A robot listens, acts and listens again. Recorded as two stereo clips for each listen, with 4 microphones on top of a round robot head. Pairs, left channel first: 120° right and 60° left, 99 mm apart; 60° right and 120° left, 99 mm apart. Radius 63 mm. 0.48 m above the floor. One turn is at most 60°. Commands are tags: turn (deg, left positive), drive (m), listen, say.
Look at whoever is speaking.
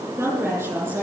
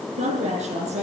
<turn deg="60"/>
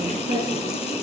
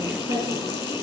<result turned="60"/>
<turn deg="60"/>
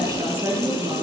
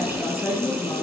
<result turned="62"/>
<say>Facing the woman speaking, over 4 m away.</say>